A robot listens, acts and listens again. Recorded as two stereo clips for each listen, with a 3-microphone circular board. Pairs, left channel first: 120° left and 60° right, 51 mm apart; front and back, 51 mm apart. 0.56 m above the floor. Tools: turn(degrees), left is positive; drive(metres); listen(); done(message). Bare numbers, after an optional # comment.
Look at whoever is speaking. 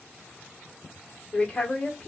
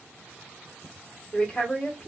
# The woman speaking: 55° left.
turn(55)
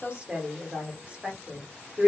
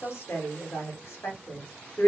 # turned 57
done("Facing the woman speaking.")